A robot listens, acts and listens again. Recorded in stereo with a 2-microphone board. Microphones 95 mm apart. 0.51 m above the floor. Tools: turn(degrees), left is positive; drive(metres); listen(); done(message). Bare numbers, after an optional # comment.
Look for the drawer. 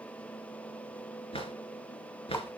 turn(90)
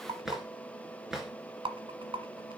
done("Found it: a drawer, straight ahead.")